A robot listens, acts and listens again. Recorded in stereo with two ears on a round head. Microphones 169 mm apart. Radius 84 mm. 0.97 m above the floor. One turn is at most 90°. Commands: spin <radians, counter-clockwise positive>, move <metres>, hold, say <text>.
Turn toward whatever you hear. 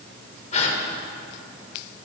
spin 0.70
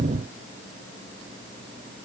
hold
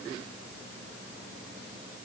say I heard a gasp, but can't make it out now. It was about straight ahead or 100° left.